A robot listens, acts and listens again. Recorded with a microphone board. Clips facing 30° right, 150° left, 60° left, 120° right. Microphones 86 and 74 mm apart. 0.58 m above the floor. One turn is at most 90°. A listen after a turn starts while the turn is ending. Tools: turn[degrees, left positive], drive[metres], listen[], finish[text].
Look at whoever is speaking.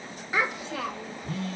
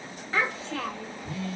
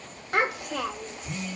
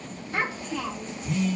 Thought: The child speaking: 45° left.
Action: turn[45]
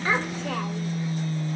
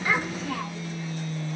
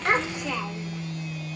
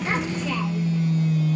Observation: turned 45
Action: listen[]
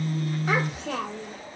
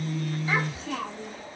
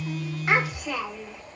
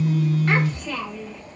Thought: The child speaking is now 15° right.
Action: turn[-15]
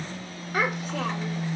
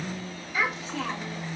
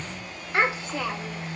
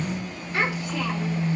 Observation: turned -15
Action: finish[Found it: a child speaking, straight ahead.]